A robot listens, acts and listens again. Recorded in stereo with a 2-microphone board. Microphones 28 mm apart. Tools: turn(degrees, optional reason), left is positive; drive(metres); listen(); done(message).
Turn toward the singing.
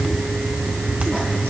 listen()
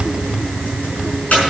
listen()
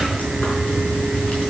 done("I can't make out singing, only frying.")